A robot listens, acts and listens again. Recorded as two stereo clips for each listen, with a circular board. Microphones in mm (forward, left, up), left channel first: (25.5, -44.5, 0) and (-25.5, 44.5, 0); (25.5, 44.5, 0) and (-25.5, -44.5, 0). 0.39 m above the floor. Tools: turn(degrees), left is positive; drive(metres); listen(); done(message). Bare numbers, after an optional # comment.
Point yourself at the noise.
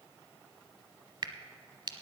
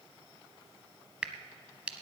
# The crack: 160° left.
turn(160)
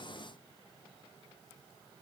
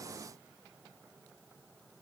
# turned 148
# Nothing new. It was at 15° left.
turn(15)
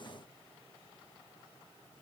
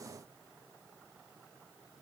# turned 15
done("I heard a crack from this way, but can't make it out now.")